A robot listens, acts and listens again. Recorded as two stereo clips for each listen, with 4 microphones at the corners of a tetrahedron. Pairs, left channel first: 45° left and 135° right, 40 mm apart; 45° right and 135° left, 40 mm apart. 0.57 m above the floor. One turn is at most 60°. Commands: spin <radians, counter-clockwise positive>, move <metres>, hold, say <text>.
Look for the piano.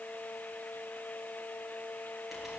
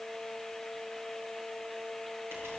hold
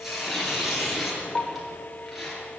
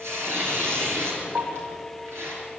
spin 1.05
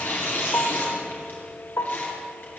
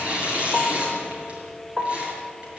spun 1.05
spin 0.70
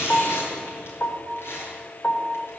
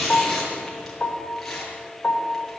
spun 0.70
say Found it: a piano, straight ahead.